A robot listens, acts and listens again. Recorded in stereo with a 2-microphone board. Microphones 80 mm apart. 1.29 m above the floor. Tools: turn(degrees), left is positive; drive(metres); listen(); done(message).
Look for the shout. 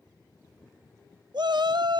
turn(degrees=-70)
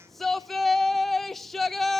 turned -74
done("Found it: a shout, straight ahead.")